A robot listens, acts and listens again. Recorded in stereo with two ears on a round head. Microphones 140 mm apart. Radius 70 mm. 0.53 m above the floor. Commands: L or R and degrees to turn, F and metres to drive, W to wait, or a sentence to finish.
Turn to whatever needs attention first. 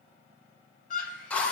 L50
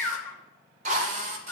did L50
L10
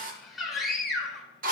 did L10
Facing the scream.